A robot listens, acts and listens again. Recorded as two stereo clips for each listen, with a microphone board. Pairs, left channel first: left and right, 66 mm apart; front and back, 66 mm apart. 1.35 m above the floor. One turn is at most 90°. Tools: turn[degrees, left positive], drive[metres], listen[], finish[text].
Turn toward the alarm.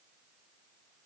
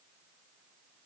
Action: listen[]
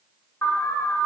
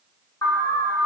Thought: The alarm: 40° left.
Action: turn[40]
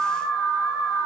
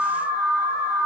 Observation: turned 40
Action: finish[Facing the alarm.]